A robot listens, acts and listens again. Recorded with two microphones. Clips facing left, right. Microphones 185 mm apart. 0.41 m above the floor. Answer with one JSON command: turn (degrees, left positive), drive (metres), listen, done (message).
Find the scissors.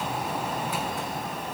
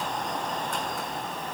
{"listen": true}
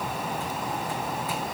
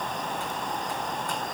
{"listen": true}
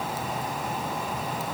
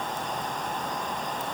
{"done": "I can't make out scissors to turn to."}